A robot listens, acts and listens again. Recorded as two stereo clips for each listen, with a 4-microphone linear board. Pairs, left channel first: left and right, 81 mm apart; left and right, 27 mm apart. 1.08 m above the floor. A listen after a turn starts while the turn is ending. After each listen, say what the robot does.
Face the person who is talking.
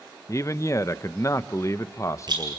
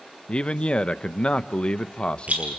Turn 40° left.
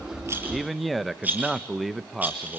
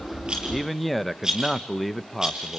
Found it: a man speaking, straight ahead.